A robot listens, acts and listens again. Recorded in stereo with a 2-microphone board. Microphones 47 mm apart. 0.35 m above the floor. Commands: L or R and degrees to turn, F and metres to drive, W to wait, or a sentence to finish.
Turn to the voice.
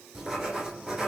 W
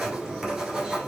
W
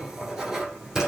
I can't make out anyone speaking to turn to.